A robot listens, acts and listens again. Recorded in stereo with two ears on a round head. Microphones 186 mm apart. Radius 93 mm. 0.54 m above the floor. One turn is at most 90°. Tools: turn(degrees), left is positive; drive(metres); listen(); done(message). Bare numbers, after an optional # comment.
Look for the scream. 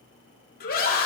# The scream: about 45° left or 135° left.
turn(45)
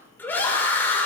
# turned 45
# So it is at 10° left.
turn(10)
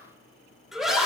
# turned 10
done("Found it: a scream, straight ahead, 1 to 2 m away.")